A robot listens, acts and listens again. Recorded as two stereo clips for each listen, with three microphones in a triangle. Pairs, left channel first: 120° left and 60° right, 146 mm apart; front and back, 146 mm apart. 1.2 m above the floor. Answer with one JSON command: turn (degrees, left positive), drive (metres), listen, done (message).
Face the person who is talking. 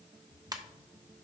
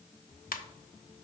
{"listen": true}
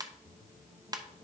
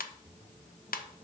{"listen": true}
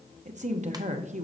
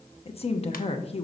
{"turn": -40}
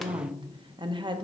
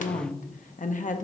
{"turn": -10}
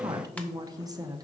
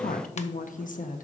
{"done": "Facing the woman speaking."}